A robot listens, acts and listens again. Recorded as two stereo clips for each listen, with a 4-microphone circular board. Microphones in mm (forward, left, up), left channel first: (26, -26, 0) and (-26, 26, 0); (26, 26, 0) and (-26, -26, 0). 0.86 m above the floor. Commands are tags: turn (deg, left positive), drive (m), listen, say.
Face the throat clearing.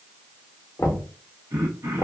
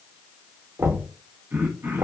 <turn deg="165"/>
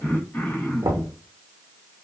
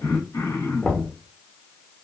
<turn deg="15"/>
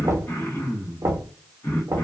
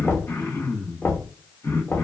<say>Found it: throat clearing, straight ahead, 1 to 2 m away.</say>